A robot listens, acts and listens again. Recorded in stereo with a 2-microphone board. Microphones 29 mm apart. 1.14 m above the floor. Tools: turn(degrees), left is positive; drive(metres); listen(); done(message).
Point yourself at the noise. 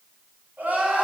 turn(degrees=-90)
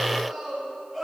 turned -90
turn(degrees=10)
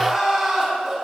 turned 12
done("Found it: crying, straight ahead, 2 to 4 m away.")